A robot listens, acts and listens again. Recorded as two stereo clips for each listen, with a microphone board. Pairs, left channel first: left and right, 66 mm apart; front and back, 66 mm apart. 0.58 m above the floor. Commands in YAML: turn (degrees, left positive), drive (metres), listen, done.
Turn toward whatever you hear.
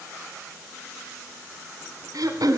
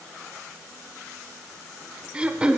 turn: -105
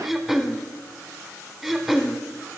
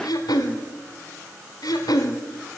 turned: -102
done: "Facing the throat clearing, 1 to 2 m away."